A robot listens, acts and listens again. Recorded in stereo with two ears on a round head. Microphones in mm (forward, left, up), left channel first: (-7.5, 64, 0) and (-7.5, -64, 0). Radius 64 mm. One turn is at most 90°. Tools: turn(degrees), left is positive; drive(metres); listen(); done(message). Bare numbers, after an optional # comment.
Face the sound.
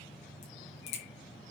# The crack: about 45° left or 135° left.
turn(45)
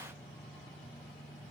listen()
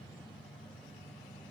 done("I heard a crack, but can't make it out now. It was about straight ahead or 90° left.")